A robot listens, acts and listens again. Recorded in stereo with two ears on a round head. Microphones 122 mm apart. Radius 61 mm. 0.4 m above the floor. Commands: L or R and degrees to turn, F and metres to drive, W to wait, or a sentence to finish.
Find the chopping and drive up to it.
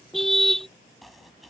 L30
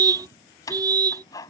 L150
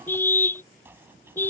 R20
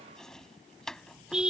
F1.0
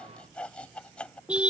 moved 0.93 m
L10
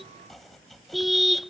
F1.0
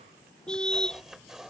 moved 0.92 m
F1.0
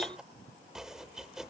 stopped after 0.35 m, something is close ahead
Arrived at the chopping, straight ahead.